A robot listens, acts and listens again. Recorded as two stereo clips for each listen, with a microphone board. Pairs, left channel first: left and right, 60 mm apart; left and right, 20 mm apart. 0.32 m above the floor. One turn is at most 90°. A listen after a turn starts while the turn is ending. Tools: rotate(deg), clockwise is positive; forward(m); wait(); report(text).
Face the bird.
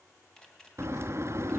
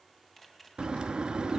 rotate(50)
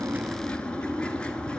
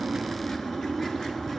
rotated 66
rotate(-15)
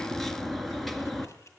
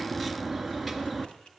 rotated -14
report("Found it: a bird, straight ahead.")